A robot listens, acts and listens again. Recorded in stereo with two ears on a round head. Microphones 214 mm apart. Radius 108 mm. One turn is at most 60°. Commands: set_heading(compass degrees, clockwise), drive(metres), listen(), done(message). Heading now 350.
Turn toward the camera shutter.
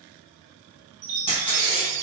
set_heading(330)
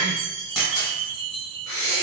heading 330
done("Facing the camera shutter.")